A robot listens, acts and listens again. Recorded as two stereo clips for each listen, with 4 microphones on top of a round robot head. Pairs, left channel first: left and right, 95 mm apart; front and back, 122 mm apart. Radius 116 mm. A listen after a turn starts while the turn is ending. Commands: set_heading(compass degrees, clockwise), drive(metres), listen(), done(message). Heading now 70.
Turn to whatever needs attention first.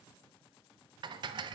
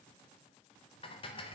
listen()
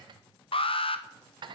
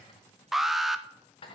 set_heading(335)
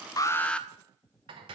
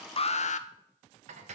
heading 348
set_heading(338)
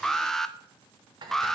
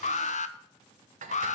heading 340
done("Facing the alarm.")